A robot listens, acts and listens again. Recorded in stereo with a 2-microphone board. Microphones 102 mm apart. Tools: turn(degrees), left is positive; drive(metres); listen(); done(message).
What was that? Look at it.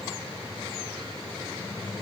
listen()
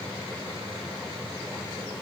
listen()
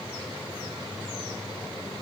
done("I can't make out anything.")